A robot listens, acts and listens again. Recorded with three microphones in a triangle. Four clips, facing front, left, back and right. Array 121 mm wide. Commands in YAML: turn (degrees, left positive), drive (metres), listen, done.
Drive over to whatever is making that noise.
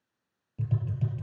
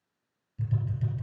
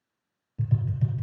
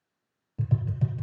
turn: -80
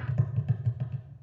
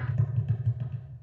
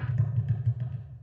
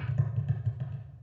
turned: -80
drive: 1.0
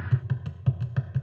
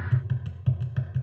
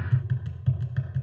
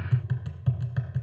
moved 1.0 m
drive: 1.0
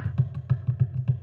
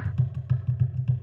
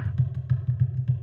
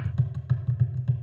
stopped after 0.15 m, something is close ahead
turn: -10
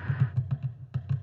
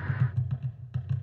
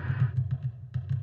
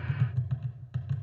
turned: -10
done: "I am next to the tapping."